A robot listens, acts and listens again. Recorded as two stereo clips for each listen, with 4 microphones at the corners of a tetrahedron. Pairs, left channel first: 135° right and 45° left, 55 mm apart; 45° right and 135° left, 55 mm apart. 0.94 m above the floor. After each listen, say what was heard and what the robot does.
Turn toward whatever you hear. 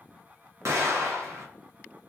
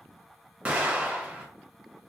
The explosion: 75° left. Turn 75° left.
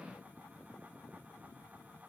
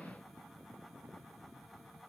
Facing where the explosion came from. I can't hear it now.